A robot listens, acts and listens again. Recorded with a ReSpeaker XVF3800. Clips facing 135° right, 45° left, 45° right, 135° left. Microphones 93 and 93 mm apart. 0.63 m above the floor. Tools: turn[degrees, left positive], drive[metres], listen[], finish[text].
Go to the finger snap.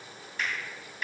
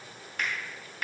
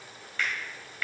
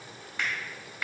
Thought: The finger snap: 65° left.
Action: turn[65]
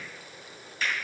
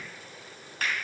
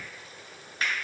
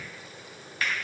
Thought: The finger snap is now 15° left.
Action: turn[15]
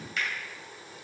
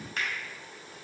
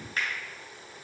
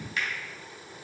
Action: drive[1.0]
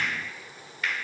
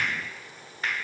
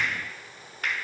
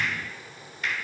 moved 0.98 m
Thought: The finger snap is now 10° right.
Action: turn[-10]
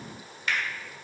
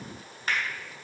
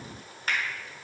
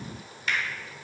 Action: drive[1.0]
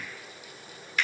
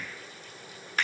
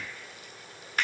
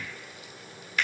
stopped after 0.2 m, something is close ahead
Action: finish[I am next to the finger snap.]